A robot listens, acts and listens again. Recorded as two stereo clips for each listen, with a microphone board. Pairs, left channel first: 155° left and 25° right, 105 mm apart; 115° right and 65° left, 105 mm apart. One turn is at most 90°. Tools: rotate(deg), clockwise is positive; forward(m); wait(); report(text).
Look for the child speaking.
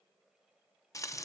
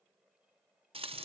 wait()
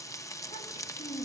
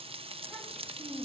rotate(-90)
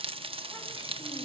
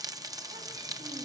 rotate(-75)
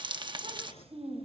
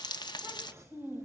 report("Facing the child speaking.")